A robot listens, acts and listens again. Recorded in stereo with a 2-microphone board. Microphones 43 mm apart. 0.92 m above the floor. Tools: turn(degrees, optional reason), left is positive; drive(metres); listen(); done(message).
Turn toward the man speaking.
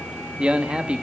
turn(degrees=-30, reason="The man speaking: about 30° right or 150° right.")
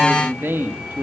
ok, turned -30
turn(degrees=-115, reason="So it is at 115° right.")
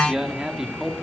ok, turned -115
turn(degrees=-10, reason="The man speaking is now 10° right.")
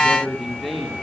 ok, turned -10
done("Found it: a man speaking, straight ahead.")